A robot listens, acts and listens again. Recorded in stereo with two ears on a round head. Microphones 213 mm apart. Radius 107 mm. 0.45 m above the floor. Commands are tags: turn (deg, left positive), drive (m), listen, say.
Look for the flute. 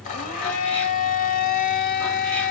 <listen/>
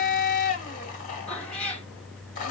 <listen/>
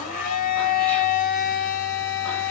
<say>I can't make out a flute, only a cat meowing and a blender.</say>